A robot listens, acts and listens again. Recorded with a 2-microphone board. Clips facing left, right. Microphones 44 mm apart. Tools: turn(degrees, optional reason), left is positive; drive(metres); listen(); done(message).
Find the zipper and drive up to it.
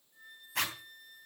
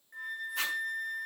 turn(degrees=90)
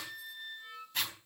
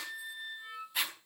turn(degrees=-10, reason="So it is at 10° right.")
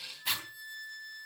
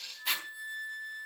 drive(metres=1.0)
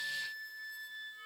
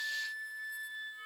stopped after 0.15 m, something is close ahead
listen()
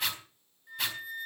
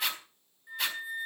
done("Something is in my way. I am facing the zipper but have not reached it.")